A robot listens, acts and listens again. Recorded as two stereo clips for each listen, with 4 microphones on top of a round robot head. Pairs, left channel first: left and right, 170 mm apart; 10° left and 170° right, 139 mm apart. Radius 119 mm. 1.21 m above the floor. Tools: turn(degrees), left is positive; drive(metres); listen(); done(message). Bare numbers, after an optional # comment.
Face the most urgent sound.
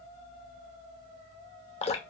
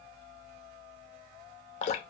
listen()
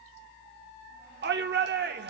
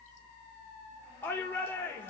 # The shout: 70° right.
turn(-70)
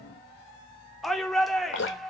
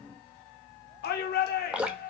done("Facing the shout, 1 to 2 m away.")